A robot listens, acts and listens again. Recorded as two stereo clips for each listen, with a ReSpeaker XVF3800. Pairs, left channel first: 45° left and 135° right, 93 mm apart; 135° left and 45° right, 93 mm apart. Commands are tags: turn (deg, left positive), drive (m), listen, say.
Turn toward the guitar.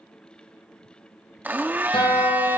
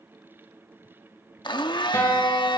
<turn deg="75"/>
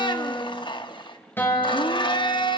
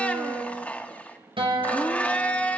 <turn deg="-20"/>
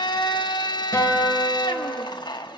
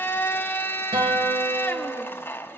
<turn deg="-10"/>
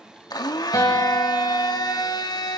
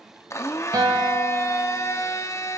<say>Found it: a guitar, straight ahead.</say>